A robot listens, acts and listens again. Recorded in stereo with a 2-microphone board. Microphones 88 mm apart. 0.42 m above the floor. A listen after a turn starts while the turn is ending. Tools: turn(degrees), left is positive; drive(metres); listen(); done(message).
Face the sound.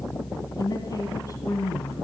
turn(degrees=40)
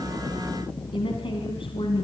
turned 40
turn(degrees=115)
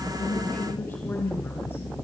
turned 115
turn(degrees=20)
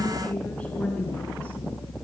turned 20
turn(degrees=15)
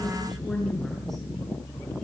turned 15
done("Facing the woman speaking.")